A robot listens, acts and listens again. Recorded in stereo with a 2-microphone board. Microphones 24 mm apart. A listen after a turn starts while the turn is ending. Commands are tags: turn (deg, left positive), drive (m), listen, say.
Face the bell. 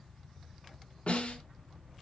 <turn deg="-65"/>
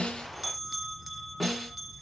<turn deg="-10"/>
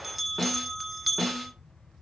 <say>Facing the bell.</say>